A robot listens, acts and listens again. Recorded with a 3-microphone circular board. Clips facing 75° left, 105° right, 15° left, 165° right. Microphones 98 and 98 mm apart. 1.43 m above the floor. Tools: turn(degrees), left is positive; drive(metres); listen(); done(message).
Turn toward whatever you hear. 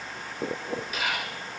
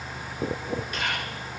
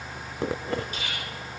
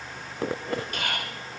turn(degrees=160)
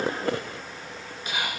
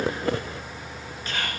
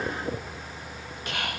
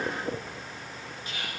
done("Found it: whispering, straight ahead, 1 to 2 m away.")